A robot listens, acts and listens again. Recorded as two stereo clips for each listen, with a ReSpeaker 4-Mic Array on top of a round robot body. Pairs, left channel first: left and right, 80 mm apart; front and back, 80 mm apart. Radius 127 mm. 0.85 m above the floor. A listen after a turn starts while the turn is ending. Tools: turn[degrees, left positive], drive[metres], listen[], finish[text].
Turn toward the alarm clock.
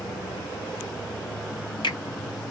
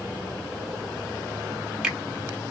Action: listen[]
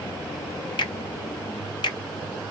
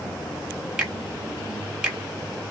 Action: listen[]
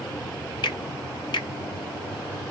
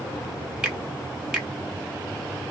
Action: finish[I can't make out an alarm clock, only a finger snap.]